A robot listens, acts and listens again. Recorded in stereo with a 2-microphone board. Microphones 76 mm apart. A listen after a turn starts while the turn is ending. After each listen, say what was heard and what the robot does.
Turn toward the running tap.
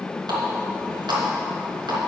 Turn 90° right.
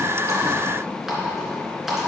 Facing the running tap.